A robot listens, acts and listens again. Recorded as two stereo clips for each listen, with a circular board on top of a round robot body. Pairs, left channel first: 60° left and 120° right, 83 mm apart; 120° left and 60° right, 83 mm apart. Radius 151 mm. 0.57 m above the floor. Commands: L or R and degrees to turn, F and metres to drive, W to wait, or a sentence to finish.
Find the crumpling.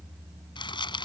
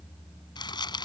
L85
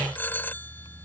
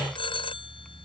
W
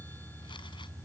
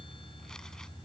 W
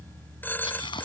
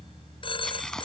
L40
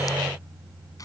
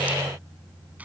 L15
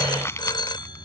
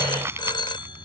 Found it: crumpling, straight ahead.